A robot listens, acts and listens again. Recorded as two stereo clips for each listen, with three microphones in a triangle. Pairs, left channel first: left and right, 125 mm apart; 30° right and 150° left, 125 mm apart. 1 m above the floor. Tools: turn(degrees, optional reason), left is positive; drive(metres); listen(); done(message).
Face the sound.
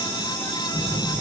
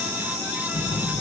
turn(degrees=45, reason="The phone buzzing: 45° left.")
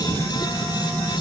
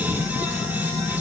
turn(degrees=15, reason="The phone buzzing is now 15° left.")
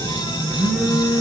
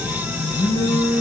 done("Found it: a phone buzzing, straight ahead.")